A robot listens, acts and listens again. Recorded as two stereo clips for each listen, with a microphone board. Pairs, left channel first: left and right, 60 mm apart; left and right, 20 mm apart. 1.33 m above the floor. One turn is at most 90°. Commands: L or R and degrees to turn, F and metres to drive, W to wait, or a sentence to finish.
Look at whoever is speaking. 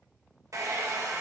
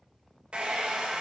W
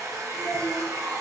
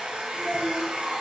R90
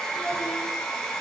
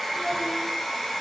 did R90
W
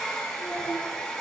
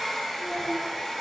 W
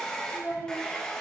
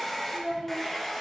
L30
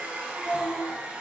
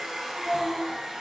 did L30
Found it: a child speaking, straight ahead.